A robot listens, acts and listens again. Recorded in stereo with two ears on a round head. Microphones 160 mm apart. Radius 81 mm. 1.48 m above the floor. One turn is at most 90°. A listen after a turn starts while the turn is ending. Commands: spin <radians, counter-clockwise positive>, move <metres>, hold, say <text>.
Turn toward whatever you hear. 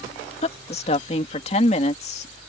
spin 0.70
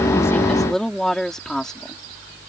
say Facing the woman speaking.